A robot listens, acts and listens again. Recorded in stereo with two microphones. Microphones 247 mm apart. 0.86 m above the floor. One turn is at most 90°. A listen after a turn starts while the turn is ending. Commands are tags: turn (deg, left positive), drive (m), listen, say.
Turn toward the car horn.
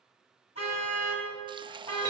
<turn deg="90"/>
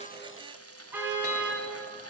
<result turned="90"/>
<turn deg="-10"/>
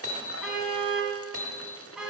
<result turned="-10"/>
<say>Facing the car horn, 2 to 4 m away.</say>